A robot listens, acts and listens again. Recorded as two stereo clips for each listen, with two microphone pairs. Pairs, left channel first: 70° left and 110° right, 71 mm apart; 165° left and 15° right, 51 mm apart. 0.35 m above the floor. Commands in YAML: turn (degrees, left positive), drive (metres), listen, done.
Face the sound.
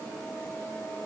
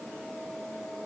listen: true
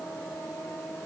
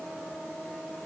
listen: true
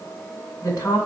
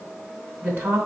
turn: 30
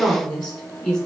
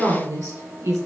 turn: -15
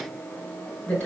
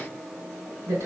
done: "Found it: a woman speaking, straight ahead, 2 to 4 m away."